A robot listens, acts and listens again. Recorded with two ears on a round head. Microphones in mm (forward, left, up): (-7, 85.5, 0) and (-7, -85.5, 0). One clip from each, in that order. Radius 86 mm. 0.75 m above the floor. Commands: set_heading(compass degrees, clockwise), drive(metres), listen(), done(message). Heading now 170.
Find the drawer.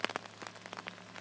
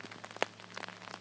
listen()
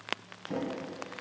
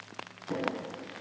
set_heading(185)
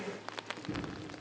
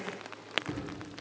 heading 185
set_heading(335)
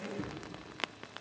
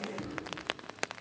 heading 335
done("Found it: a drawer, straight ahead, 2 to 4 m away.")